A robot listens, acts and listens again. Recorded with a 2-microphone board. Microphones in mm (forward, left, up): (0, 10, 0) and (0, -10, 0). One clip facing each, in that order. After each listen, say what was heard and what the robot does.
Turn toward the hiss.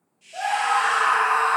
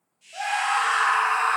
Turn 30° left.
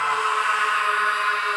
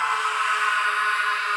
Keep listening.
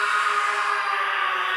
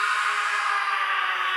Keep listening.
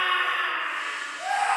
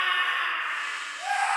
I heard a hiss, but can't make it out now. It was about 25° right or 145° left.